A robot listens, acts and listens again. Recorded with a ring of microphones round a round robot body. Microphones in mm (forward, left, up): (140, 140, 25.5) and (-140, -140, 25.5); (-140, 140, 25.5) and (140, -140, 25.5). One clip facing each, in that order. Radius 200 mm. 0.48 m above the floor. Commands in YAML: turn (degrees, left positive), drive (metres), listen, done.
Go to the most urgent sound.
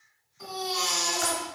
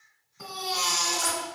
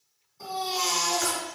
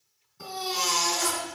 turn: -115
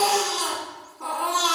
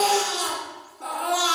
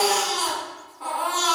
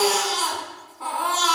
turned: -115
turn: -35
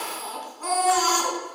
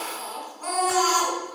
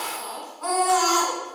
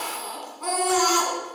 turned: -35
drive: 1.0
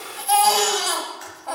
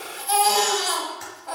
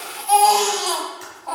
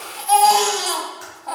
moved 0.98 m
turn: 10
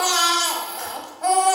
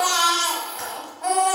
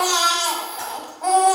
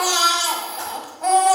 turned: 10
drive: 1.0
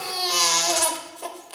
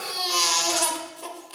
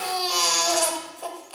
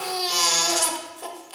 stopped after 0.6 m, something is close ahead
turn: 15
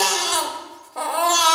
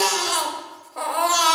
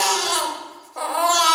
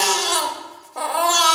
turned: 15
done: "I am next to the baby crying."